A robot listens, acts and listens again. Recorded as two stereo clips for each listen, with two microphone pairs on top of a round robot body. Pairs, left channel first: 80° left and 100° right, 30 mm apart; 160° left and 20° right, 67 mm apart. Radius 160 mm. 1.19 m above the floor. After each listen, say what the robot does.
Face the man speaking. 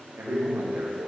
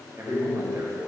Turn 65° right.
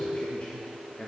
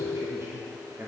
Turn 35° left.
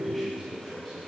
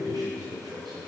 Found it: a man speaking, straight ahead.